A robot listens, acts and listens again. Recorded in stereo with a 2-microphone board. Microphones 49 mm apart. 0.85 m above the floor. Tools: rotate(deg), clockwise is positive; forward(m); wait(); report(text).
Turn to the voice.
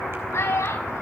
rotate(-90)
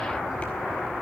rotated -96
wait()
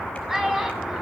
rotate(10)
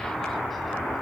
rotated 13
wait()
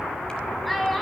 report("Facing the child speaking, over 4 m away.")